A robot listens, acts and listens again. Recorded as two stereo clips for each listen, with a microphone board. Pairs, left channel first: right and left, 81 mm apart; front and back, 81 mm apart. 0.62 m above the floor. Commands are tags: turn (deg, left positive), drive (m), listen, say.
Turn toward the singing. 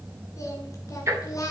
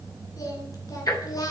<turn deg="-45"/>
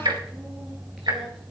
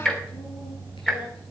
<listen/>
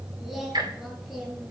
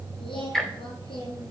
<say>Facing the singing.</say>